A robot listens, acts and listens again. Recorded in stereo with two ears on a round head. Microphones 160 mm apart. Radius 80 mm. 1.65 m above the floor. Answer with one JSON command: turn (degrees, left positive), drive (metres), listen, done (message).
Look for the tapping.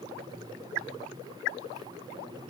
{"listen": true}
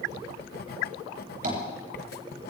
{"turn": -45}
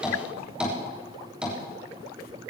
{"done": "Found it: tapping, straight ahead, over 4 m away."}